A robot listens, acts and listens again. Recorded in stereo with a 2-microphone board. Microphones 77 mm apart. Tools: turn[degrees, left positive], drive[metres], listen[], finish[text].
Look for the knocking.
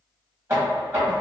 Thought: The knocking: about 35° right or 145° right.
Action: turn[-35]
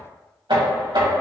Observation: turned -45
Thought: So it is at 100° right.
Action: turn[-100]
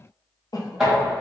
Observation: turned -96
Action: finish[Facing the knocking.]